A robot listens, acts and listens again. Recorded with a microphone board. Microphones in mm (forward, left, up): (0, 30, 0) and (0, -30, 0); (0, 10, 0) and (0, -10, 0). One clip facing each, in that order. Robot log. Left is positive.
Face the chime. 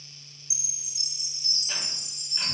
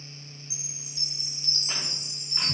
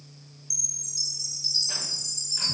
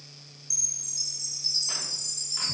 cmd yaw +30
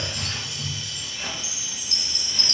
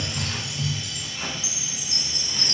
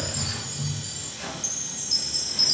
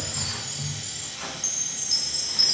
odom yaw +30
note: So it is at 20° right.
cmd yaw -20
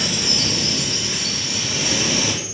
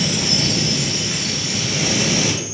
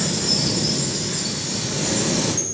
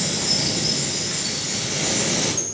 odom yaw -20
cmd idle
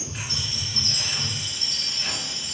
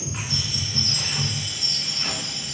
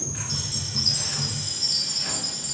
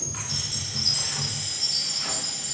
end: Facing the chime, 1 to 2 m away.